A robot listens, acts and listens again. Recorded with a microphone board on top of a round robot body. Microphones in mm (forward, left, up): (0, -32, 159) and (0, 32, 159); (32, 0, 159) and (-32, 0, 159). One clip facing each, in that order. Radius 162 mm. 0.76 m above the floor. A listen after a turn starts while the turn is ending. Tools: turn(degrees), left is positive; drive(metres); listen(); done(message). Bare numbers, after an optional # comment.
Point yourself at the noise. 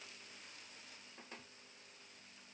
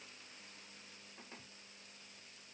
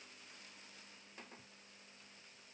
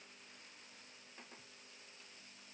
listen()
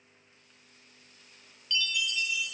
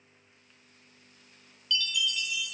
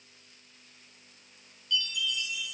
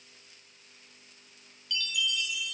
# The chime: 150° right.
turn(-150)
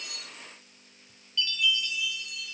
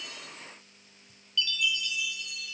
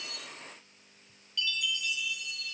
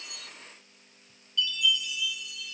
# The chime is now 35° right.
turn(-35)
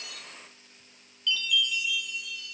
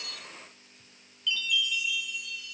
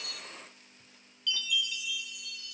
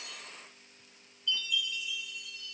done("Facing the chime, 2 to 4 m away.")